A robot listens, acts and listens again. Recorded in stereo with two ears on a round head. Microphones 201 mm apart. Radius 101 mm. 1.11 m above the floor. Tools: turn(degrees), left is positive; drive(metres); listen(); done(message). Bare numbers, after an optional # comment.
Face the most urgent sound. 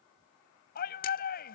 # The shout: about 45° left or 135° left.
turn(45)
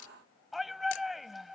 done("Facing the shout.")